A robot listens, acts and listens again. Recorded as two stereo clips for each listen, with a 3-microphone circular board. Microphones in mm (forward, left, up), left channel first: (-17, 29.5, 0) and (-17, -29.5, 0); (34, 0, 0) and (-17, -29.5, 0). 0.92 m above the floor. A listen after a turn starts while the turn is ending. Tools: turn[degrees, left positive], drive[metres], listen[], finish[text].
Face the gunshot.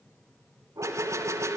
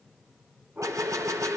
Thought: The gunshot: 125° right.
Action: turn[-125]
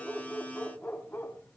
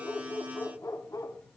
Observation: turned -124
Action: finish[I heard a gunshot from this way, but can't make it out now.]